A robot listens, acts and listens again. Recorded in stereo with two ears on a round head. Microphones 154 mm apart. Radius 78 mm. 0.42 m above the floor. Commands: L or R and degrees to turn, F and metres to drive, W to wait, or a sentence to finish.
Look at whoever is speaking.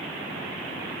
W
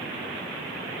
W
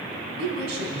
R65
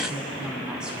Found it: a woman speaking, straight ahead.